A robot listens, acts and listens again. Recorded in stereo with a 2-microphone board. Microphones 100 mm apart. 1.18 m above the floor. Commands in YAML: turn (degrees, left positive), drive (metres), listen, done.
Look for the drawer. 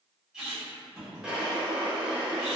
turn: -30
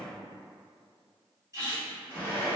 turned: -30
turn: 20
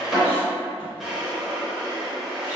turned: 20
done: "Found it: a drawer, straight ahead."